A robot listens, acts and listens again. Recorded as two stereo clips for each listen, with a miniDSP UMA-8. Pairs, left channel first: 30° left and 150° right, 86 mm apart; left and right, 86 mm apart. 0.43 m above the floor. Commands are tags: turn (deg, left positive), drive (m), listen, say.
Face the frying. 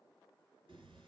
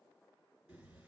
<listen/>
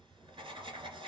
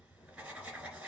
<listen/>
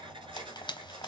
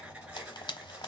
<turn deg="60"/>
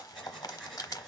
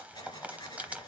<turn deg="-20"/>
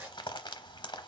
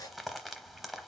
<say>Facing the frying.</say>